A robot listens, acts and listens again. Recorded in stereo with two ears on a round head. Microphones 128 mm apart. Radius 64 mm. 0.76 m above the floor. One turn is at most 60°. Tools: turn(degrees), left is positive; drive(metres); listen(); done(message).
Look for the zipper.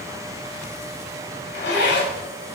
turn(degrees=60)
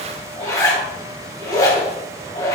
turn(degrees=25)
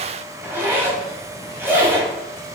turn(degrees=-15)
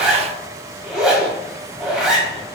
done("Facing the zipper.")